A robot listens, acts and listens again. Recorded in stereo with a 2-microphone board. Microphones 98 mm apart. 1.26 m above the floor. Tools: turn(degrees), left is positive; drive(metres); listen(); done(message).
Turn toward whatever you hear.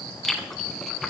turn(degrees=30)
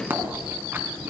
turn(degrees=-25)
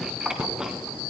turn(degrees=-10)
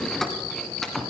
done("Found it: chewing, straight ahead, 2 to 4 m away.")